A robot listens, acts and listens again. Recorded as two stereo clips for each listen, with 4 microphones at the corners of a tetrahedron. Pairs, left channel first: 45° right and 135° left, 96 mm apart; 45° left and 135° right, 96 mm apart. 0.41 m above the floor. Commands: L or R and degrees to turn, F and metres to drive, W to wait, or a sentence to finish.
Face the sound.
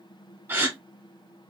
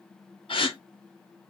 L70
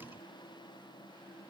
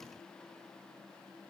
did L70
I heard a gasp from this way, but can't make it out now.